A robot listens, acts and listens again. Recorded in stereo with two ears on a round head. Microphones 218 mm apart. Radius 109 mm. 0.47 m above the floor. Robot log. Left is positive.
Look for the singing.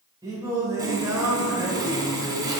cmd yaw -30
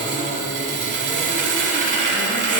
cmd idle
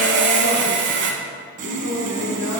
note: So it is at 55° left.
cmd yaw +55
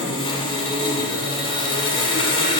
cmd idle
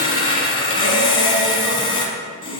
cmd idle
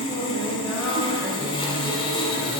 end: Found it: singing, straight ahead.